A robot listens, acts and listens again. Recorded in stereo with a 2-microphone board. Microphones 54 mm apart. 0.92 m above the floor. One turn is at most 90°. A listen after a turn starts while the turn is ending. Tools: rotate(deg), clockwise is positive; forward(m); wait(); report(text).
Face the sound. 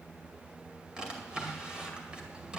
rotate(20)
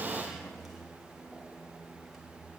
wait()
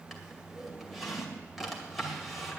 report("Facing the drawer, 2 to 4 m away.")